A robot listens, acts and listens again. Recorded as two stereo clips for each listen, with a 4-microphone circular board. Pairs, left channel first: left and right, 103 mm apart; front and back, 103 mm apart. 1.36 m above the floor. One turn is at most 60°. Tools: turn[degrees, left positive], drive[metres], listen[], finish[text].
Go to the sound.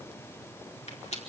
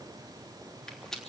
Thought: The rattle: 85° left.
Action: turn[60]
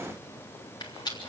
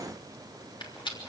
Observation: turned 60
Thought: The rattle is now 40° left.
Action: turn[40]
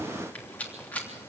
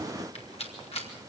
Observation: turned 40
Thought: The rattle is now 15° left.
Action: turn[15]
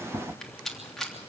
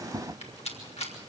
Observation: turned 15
Action: drive[1.0]
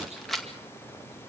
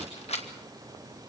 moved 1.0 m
Action: drive[1.0]
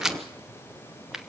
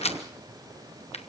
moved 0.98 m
Action: drive[1.0]
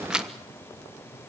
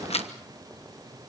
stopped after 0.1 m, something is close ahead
Action: finish[Arrived at the rattle, straight ahead.]